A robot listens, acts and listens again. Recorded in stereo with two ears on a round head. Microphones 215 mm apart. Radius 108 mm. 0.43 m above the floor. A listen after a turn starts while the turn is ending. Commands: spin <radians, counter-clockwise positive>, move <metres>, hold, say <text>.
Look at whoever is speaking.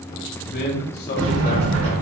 spin 0.70
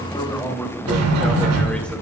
say Facing the man speaking.